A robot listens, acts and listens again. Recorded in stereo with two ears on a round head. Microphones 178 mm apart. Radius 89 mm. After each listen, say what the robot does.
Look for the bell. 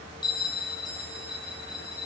Turn 20° left.
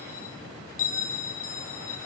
Turn 140° left.
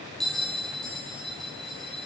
Facing the bell, over 4 m away.